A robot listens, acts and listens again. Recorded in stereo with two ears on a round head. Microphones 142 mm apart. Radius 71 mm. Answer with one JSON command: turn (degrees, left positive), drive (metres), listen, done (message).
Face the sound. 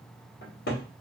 {"turn": 65}
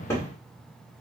{"turn": 20}
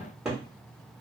{"done": "Found it: a cupboard door, straight ahead, 1 to 2 m away."}